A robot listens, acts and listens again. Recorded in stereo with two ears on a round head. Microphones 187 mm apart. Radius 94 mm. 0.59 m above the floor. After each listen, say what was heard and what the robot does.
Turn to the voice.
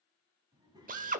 The child speaking: about 20° right or 160° right. Turn 20° right.
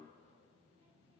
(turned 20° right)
The child speaking: about 30° right or 150° right. Turn 30° right.
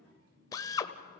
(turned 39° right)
So it is at 115° right. Turn 115° right.
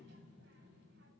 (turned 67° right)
The child speaking is now 65° right. Turn 65° right.
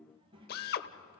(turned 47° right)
The child speaking is now 25° right. Turn 25° right.
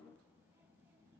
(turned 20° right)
The child speaking is now 10° right. Turn 10° right.
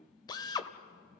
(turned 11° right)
Facing the child speaking.